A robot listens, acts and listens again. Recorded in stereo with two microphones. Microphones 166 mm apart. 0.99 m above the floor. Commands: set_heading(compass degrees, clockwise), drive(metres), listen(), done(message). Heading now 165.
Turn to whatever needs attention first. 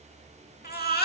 set_heading(100)
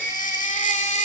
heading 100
set_heading(50)
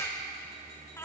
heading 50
set_heading(35)
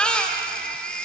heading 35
done("Found it: a baby crying, straight ahead.")